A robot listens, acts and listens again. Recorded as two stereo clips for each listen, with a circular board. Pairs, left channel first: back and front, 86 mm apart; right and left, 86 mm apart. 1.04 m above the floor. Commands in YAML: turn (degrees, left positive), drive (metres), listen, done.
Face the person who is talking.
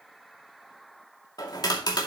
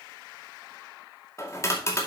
listen: true
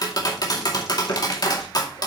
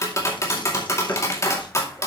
listen: true
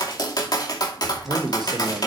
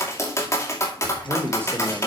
turn: 30
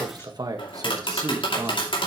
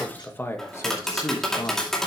turn: -45
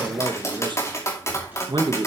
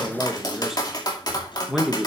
done: "Facing the man speaking, 1 to 2 m away."